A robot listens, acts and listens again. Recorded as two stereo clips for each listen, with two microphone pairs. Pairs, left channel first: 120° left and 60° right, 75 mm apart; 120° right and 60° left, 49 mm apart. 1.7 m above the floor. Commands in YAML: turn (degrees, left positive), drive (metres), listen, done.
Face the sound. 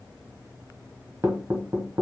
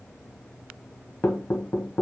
turn: -95
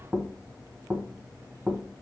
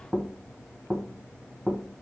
done: "Facing the knocking, 1 to 2 m away."